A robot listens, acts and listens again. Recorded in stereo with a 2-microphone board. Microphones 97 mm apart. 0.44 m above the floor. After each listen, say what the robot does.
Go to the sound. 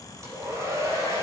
Turn 30° right.
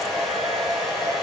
Drive 1.0 m forward.
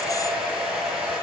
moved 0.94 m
Drive 1.0 m forward.
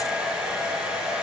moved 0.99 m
Turn 10° right.
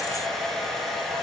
Drive 1.0 m forward.
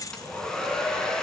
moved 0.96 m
Drive 1.0 m forward.
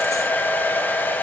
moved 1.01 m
Turn 20° left.
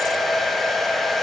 Drive 1.0 m forward.
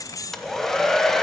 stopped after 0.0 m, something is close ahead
Arrived at the hair dryer, straight ahead.